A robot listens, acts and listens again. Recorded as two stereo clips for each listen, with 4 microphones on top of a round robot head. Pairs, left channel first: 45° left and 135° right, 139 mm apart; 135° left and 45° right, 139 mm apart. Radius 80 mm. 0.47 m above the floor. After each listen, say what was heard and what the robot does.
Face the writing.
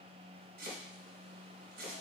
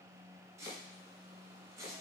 Keep listening.
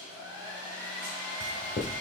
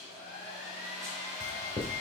The writing: 85° left. Turn 85° left.
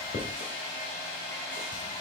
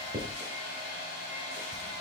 The writing is now 10° left. Turn 10° left.
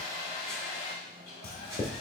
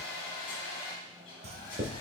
Facing the writing, under 1 m away.